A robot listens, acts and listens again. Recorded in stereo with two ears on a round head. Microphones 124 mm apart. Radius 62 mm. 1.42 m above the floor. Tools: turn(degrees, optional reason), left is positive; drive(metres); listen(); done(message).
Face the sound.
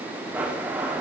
turn(degrees=-30)
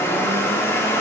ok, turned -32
turn(degrees=20, reason="So it is at 20° left.")
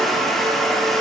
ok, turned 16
done("Facing the blender, 1 to 2 m away.")